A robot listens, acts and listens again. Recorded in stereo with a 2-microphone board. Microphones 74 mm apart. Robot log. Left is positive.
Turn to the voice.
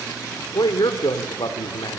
note: The man speaking: about 65° left or 115° left.
cmd yaw +65
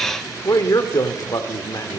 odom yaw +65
note: So it is at 50° left.
cmd yaw +50
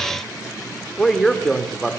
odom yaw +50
end: Found it: a man speaking, straight ahead.